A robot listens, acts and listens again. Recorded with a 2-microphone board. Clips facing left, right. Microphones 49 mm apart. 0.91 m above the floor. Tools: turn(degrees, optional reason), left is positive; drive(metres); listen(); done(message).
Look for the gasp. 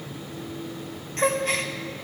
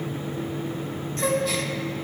turn(degrees=40, reason="The gasp: about 40° left or 140° left.")
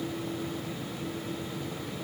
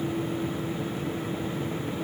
listen()
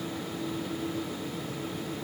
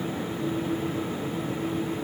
done("I heard a gasp, but can't make it out now. It was about straight ahead or 100° left.")